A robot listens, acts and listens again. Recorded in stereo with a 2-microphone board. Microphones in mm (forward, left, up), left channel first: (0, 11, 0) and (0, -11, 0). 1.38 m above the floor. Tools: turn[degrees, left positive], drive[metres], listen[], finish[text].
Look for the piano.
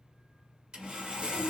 Action: listen[]
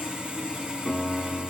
Action: turn[30]
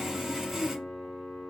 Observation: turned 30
Thought: So it is at 145° left.
Action: turn[145]
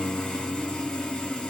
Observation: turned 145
Action: finish[Found it: a piano, straight ahead.]